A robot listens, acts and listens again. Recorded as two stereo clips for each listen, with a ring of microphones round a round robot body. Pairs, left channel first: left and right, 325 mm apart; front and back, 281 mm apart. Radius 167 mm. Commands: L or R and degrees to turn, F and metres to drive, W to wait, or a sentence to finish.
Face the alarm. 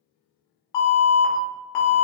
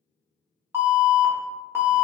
L100
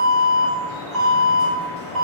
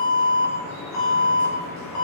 Found it: an alarm, straight ahead, 1 to 2 m away.